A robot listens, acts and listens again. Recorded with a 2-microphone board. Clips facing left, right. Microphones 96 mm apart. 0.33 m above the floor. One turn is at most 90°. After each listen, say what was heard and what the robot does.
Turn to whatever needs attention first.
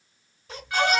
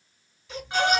The baby crying: about 45° left or 135° left. Turn 45° left.
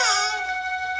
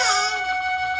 Keep listening.
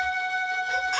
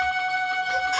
Keep listening.
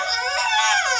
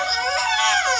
Facing the baby crying.